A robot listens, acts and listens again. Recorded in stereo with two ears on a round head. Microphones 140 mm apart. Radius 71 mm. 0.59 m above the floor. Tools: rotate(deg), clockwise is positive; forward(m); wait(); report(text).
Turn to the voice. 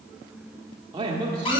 rotate(25)
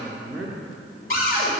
report("Facing the man speaking.")